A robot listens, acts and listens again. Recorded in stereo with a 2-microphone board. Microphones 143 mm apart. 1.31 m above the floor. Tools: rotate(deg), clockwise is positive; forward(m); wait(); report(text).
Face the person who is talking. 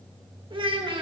rotate(35)
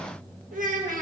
rotate(105)
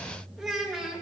report("Facing the child speaking.")